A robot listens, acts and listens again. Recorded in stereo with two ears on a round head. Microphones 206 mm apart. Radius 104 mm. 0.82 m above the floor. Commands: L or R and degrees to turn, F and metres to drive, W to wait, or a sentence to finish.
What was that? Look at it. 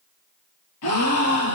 L90
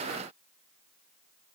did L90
Facing where the gasp came from. I can't hear it now.